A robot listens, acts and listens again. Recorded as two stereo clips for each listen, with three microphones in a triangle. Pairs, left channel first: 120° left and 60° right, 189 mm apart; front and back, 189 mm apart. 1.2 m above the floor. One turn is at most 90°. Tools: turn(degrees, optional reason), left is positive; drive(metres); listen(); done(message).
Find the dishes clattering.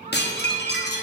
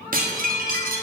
turn(degrees=90, reason="The dishes clattering: 145° left.")
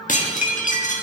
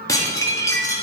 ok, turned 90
turn(degrees=70, reason="The dishes clattering is now 70° left.")
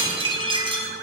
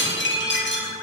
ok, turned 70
done("Facing the dishes clattering, 1 to 2 m away.")